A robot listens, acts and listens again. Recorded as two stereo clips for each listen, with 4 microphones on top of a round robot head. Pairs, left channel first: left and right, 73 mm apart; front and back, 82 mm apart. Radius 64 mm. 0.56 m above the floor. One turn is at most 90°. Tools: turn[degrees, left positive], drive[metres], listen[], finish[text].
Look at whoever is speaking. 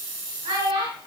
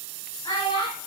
Thought: The child speaking: 60° right.
Action: turn[-60]
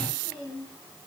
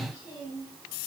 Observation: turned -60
Thought: The child speaking is now 20° left.
Action: turn[20]
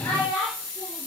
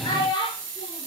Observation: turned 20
Thought: The child speaking is now 15° left.
Action: turn[15]
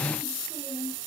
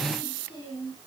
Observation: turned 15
Action: finish[Facing the child speaking.]